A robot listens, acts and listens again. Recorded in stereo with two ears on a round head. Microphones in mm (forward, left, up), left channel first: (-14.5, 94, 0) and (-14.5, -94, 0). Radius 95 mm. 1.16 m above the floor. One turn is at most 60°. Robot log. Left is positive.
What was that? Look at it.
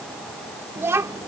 note: The child speaking: about 15° right or 165° right.
cmd yaw -15
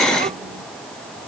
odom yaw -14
cmd idle
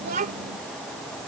note: So it is at 135° right.
cmd yaw -60
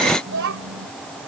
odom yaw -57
note: The child speaking is now 65° right.
cmd yaw -60
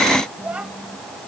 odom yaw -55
end: Found it: a child speaking, straight ahead.